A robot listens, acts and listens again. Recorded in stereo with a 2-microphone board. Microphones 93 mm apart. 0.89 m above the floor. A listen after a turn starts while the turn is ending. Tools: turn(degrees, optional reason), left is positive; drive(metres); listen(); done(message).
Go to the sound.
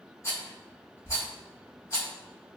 turn(degrees=35, reason="The rattle: about 35° left or 145° left.")
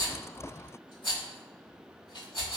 turn(degrees=110, reason="So it is at 110° left.")
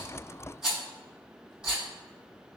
turn(degrees=-10, reason="The rattle is now 10° right.")
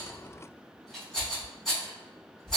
drive(metres=1.0)
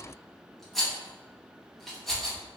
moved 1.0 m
drive(metres=1.0)
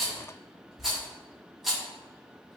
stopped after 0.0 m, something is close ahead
done("I am next to the rattle.")